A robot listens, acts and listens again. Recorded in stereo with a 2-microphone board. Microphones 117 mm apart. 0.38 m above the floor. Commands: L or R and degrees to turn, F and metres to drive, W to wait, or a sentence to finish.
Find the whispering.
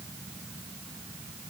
W
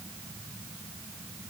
W
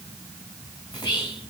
L35
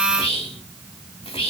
L100
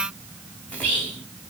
L15
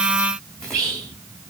Found it: whispering, straight ahead.